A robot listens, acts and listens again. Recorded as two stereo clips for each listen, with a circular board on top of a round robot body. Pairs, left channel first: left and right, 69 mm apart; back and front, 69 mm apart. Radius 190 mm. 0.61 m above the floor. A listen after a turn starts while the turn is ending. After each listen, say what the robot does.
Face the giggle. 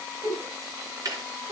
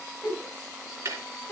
Turn 110° right.
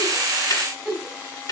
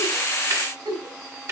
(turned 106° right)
Found it: a giggle, straight ahead.